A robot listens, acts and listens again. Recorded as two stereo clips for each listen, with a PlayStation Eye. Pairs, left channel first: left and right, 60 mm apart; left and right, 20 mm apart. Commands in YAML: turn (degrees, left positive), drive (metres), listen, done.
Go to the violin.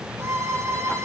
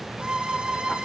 turn: -55
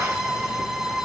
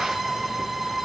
drive: 1.0
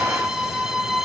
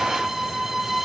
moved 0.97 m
drive: 1.0
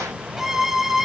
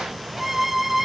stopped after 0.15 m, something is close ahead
done: "I am next to the violin."